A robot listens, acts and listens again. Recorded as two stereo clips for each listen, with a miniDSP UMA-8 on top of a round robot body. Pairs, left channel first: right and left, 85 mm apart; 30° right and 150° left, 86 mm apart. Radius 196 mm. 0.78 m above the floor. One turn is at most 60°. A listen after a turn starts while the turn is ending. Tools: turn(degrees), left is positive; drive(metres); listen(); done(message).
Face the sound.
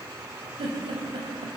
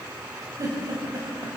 turn(degrees=60)
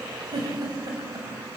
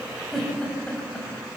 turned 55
turn(degrees=45)
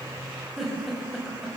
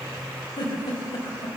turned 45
done("Found it: a giggle, straight ahead, over 4 m away.")